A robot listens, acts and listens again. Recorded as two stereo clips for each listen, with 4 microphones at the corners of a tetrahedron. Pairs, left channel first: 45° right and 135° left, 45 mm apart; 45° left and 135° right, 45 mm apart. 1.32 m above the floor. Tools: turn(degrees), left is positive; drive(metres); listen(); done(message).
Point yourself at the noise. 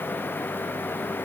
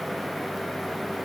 listen()
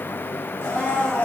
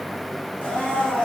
turn(degrees=-10)
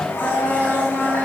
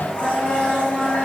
done("Facing the blender, 1 to 2 m away.")